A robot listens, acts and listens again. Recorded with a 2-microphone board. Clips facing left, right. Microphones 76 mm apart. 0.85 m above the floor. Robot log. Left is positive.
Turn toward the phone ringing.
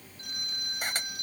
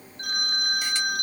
note: The phone ringing: about 65° right or 115° right.
cmd yaw -65
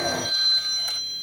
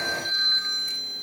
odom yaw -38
note: So it is at 25° right.
cmd yaw -25
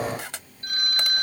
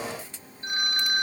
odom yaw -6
note: The phone ringing is now 20° right.
cmd yaw -20
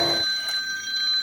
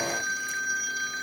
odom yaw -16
end: Facing the phone ringing.